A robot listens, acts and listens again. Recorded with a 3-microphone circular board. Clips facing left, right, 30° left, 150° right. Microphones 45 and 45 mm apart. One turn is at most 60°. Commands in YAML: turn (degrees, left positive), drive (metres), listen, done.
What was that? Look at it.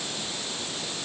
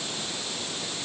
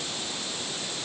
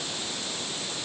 listen: true
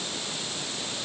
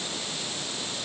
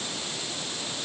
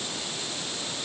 listen: true
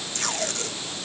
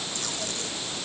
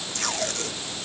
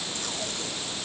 turn: 55
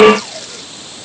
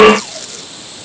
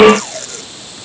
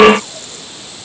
done: "Facing the tape being pulled."